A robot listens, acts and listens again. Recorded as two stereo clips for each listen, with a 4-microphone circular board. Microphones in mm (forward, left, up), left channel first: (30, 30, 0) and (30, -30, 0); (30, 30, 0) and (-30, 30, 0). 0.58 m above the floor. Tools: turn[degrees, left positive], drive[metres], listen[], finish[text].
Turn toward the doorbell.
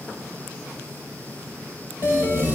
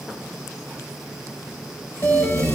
Thought: The doorbell: 50° left.
Action: turn[50]
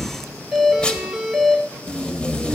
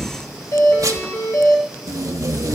Action: finish[Found it: a doorbell, straight ahead.]